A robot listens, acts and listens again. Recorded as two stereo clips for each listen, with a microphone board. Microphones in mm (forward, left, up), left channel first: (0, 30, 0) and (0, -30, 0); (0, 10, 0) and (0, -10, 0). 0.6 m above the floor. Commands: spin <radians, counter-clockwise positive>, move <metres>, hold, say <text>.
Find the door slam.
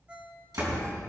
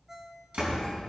spin -1.22
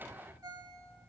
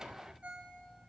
hold
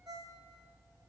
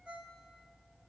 say I heard a door slam, but can't make it out now. It was about straight ahead or 40° right.